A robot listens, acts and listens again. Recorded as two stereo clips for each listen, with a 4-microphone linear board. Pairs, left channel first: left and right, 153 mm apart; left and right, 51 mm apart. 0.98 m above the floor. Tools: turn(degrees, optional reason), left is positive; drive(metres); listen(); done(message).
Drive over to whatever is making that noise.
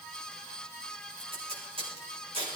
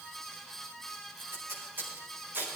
turn(degrees=-35, reason="The tape being pulled: about 35° right or 145° right.")
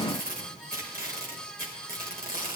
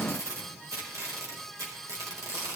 turn(degrees=-105, reason="So it is at 105° right.")
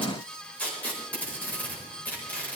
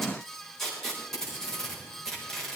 turn(degrees=10, reason="The tape being pulled is now 10° left.")
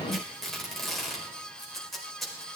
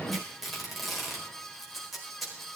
drive(metres=1.0)
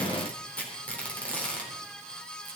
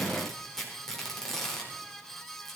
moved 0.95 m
turn(degrees=10, reason="The tape being pulled is now 10° left.")
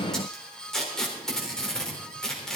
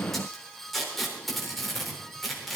drive(metres=1.0)
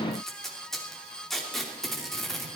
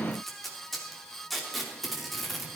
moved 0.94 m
drive(metres=1.0)
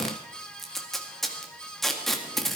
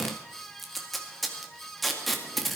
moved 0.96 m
drive(metres=1.0)
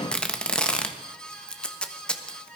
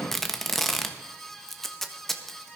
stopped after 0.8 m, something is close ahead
done("Arrived at the tape being pulled, straight ahead.")